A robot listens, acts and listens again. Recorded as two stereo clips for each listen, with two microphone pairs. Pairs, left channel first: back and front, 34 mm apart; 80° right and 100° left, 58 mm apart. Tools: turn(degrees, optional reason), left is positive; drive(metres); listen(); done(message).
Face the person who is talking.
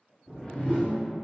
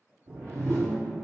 listen()
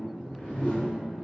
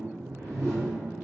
listen()
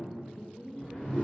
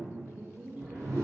turn(degrees=165, reason="The woman speaking: 165° left.")
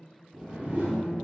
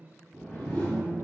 turn(degrees=35, reason="The woman speaking is now 35° left.")
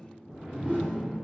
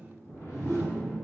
listen()
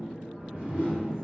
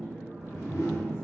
listen()
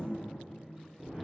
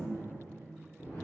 done("Facing where the woman speaking came from. I can't hear it now.")